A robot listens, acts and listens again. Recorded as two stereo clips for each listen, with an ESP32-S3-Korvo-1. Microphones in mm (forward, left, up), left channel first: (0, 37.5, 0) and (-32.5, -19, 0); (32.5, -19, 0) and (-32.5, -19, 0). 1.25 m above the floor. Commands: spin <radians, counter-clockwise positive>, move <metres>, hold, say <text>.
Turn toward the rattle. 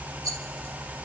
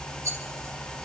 spin -2.44
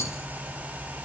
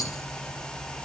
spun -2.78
spin 0.26
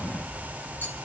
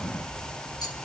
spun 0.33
hold
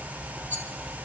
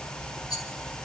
say Found it: a rattle, straight ahead.